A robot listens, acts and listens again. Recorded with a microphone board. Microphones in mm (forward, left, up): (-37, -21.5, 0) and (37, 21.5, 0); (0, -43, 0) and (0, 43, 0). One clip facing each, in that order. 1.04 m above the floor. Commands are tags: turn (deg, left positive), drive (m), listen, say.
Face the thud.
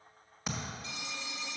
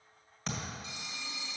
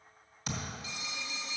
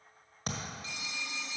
<turn deg="130"/>
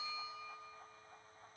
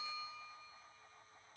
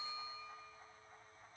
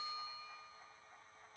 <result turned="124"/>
<say>Facing where the thud came from. I can't hear it now.</say>